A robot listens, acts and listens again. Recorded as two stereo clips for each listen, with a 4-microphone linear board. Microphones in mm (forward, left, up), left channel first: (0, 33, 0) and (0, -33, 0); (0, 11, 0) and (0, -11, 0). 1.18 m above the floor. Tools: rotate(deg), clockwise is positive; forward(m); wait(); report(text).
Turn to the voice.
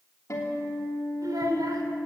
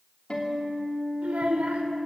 rotate(70)
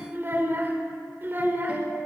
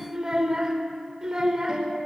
rotate(35)
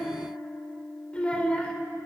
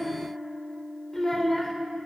rotate(-20)
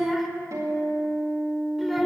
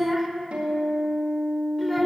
report("Facing the child speaking.")